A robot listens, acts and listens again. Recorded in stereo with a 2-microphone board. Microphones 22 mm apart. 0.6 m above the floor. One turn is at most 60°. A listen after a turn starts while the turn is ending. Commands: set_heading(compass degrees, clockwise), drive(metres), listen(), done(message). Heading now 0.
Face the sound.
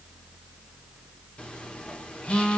set_heading(305)
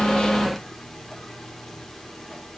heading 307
listen()
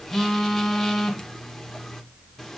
set_heading(292)
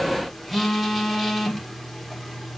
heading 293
done("Found it: a phone buzzing, straight ahead.")